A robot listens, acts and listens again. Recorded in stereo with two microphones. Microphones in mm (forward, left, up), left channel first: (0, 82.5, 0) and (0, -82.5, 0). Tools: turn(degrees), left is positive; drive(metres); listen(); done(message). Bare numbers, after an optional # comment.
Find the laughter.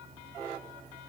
listen()
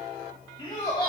# The laughter: about 25° left or 155° left.
turn(25)
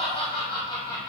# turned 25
# The laughter: about 25° left or 155° left.
turn(25)
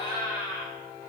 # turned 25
# The laughter: about 40° left or 140° left.
turn(40)
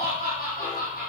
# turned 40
# So it is at 115° left.
turn(115)
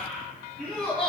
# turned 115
done("Facing the laughter, 2 to 4 m away.")